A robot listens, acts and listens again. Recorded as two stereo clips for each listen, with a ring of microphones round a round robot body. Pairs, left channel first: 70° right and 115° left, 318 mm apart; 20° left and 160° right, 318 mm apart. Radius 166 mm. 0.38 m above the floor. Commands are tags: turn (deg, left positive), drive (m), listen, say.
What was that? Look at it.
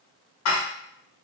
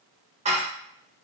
<turn deg="-90"/>
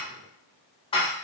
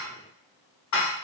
<say>Facing the dishes clattering.</say>